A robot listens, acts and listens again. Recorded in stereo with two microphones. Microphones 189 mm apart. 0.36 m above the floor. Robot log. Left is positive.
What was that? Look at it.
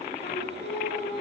note: The singing: about 60° left or 120° left.
cmd yaw +60
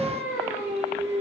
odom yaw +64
note: So it is at 15° right.
cmd yaw -15
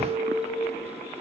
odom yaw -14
end: Found it: singing, straight ahead, over 4 m away.